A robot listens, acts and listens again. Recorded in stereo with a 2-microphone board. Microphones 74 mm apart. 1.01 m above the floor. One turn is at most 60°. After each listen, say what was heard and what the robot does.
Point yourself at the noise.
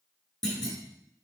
Turn 30° left.
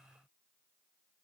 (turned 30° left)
Keep listening.
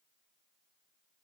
I heard a clunk, but can't make it out now. It was about 25° right or 145° left.